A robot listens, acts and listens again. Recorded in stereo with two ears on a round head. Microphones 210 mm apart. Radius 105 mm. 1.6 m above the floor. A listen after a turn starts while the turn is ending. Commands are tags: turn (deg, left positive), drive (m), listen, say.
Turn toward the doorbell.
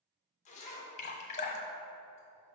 <listen/>
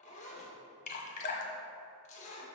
<listen/>
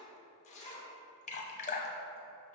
<say>I can't make out a doorbell to turn to.</say>